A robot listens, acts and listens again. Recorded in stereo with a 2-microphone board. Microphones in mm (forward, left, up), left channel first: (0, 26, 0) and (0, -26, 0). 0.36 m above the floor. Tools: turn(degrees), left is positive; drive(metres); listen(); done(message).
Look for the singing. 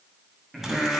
turn(degrees=30)
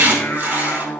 turn(degrees=130)
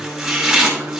turn(degrees=-45)
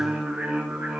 turn(degrees=-25)
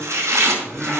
turn(degrees=-10)
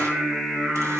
done("Facing the singing.")